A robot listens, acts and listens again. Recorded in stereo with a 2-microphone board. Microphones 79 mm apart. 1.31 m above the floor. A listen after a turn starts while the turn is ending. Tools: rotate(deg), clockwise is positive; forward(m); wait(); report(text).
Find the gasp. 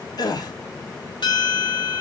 rotate(-55)
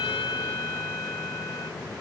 wait()
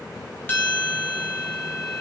report("I heard a gasp, but can't make it out now. It was about straight ahead or 70° left.")